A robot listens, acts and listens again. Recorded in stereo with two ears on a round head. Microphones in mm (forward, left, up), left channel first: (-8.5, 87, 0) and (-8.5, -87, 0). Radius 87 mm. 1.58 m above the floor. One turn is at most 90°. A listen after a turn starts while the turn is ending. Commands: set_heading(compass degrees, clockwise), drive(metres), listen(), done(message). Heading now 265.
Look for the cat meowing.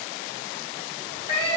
set_heading(235)
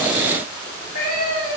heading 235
set_heading(190)
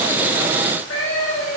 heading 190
set_heading(100)
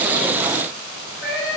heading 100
set_heading(50)
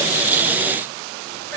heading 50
listen()
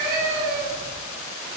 done("Found it: a cat meowing, straight ahead.")